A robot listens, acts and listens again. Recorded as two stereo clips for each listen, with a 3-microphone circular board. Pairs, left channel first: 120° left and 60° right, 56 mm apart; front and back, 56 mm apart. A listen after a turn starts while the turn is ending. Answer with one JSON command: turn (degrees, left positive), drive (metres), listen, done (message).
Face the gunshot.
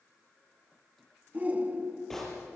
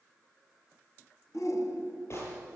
{"turn": 35}
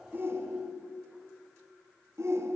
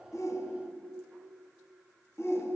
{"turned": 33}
{"done": "Facing where the gunshot came from. I can't hear it now."}